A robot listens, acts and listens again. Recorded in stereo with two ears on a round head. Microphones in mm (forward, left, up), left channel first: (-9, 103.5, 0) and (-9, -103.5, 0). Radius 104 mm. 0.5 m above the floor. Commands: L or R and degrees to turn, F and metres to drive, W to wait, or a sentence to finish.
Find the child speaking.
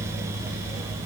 W
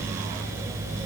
W
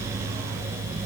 I can't make out a child speaking.